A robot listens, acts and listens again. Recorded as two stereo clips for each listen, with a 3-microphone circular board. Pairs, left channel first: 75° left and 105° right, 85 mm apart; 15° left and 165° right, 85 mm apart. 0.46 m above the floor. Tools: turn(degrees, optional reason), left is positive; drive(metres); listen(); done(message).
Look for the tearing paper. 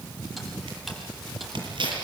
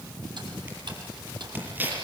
turn(degrees=-100, reason="The tearing paper: 100° right.")
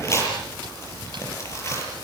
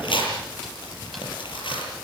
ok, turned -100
turn(degrees=20, reason="The tearing paper is now 20° left.")
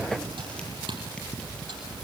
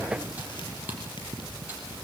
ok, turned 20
listen()
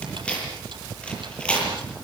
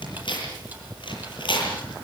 done("Facing the tearing paper, over 4 m away.")